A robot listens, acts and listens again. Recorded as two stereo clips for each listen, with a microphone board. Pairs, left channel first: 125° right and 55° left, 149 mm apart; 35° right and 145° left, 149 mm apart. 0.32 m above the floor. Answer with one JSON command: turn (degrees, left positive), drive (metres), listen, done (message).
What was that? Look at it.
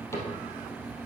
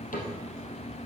{"turn": -55}
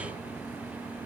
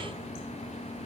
{"listen": true}
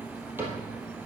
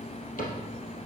{"turn": -20}
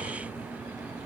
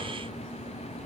{"listen": true}
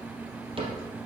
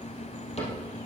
{"done": "Facing the cupboard door."}